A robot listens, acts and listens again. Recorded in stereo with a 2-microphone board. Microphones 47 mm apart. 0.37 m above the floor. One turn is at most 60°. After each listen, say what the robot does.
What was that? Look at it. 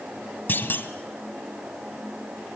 Turn 45° left.
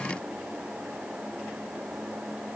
Keep listening.
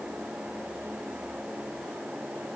I heard a clunk, but can't make it out now. It was about straight ahead or 90° left.